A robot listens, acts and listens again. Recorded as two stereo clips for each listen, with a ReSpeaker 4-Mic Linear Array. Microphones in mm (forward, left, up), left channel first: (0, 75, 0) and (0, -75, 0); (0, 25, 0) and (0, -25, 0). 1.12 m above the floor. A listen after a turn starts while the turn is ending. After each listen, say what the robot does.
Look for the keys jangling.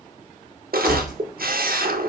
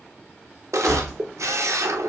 Turn 30° left.
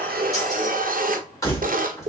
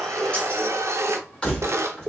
Turn 160° left.
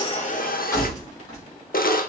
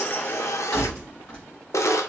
Turn 25° left.
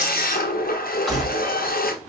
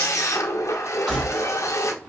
Facing the keys jangling, 2 to 4 m away.